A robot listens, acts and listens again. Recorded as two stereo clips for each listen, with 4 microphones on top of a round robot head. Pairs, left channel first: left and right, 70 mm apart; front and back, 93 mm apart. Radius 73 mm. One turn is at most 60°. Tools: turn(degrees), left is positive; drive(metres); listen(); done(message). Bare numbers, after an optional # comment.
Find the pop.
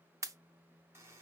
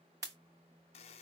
# The pop: 130° right.
turn(-60)
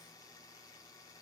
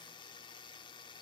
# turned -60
# Nothing new. It was at 70° right.
turn(-60)
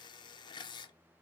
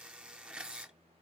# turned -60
# Nothing new. It was at 10° right.
turn(-10)
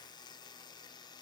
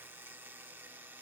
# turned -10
done("Facing where the pop came from. I can't hear it now.")